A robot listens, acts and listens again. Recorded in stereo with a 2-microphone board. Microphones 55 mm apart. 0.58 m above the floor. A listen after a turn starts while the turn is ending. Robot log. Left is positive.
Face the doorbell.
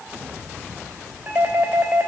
note: The doorbell: about 30° right or 150° right.
cmd yaw -30
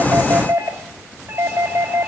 note: So it is at 115° right.
cmd yaw -115
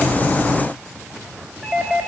note: The doorbell is now 15° right.
cmd yaw -15
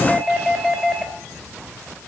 end: Found it: a doorbell, straight ahead, 2 to 4 m away.